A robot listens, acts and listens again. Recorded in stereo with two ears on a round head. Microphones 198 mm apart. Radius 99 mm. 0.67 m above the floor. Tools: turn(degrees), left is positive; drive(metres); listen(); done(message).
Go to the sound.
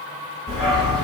turn(degrees=30)
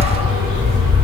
turn(degrees=-30)
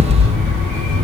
drive(metres=1.0)
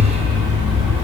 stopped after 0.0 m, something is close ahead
done("Something is in my way. I am facing the dog barking but have not reached it.")